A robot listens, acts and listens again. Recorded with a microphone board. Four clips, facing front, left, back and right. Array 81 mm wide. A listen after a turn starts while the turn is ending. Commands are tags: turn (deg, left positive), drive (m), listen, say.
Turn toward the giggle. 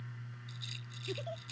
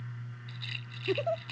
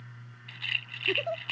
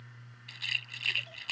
<turn deg="125"/>
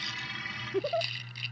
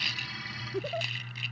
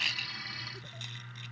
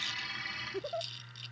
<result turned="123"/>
<say>Facing the giggle.</say>